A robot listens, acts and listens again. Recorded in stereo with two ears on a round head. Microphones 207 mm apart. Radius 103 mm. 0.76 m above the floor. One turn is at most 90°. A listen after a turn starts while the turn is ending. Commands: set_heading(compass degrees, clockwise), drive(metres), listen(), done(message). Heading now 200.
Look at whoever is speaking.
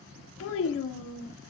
set_heading(140)
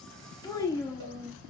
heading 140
set_heading(125)
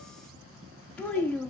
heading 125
set_heading(115)
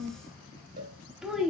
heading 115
done("Facing the child speaking.")